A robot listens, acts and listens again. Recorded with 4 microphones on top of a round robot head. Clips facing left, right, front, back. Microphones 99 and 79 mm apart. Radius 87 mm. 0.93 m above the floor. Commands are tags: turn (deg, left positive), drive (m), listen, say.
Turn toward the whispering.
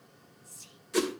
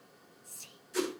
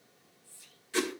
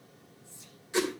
<turn deg="-115"/>
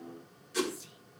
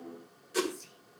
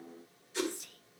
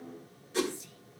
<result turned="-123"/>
<turn deg="10"/>
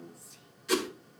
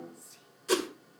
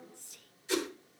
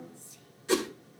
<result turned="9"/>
<say>Facing the whispering.</say>